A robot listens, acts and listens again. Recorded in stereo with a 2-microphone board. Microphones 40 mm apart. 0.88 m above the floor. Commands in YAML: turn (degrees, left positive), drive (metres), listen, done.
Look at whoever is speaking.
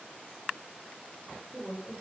turn: -45
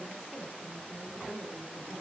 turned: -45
turn: -85
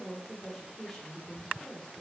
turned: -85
done: "Facing the woman speaking."